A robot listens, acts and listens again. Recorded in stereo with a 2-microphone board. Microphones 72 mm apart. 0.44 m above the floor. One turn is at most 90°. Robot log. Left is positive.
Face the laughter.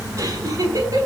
note: The laughter: about 55° right or 125° right.
cmd yaw -55
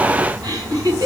note: So it is at 65° right.
cmd yaw -65
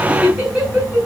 note: The laughter is now 20° right.
cmd yaw -20
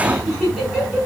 note: The laughter is now 10° right.
cmd yaw -10
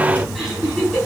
end: Found it: laughter, straight ahead.